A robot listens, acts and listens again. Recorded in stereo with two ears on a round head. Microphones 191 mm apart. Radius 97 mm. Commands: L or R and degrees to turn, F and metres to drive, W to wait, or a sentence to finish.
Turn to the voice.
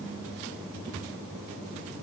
W
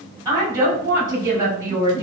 R15
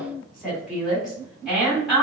Facing the woman speaking.